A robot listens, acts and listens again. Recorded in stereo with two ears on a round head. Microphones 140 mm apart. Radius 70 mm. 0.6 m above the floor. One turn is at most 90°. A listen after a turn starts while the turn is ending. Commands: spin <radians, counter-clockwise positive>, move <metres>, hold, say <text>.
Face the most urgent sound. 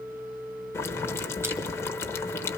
hold
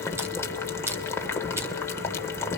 hold
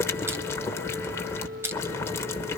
say I can't make out anything urgent to turn to.